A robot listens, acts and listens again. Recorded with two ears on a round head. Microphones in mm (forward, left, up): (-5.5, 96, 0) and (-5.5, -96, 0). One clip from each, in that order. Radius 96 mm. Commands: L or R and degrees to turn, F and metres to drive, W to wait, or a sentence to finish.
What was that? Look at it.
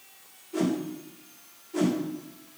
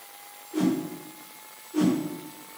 L30
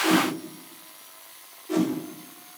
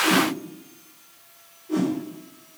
L120
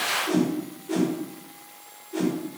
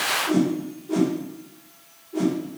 L45
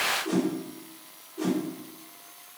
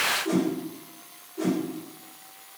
R10
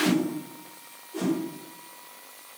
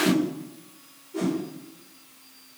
Facing the whoosh, over 4 m away.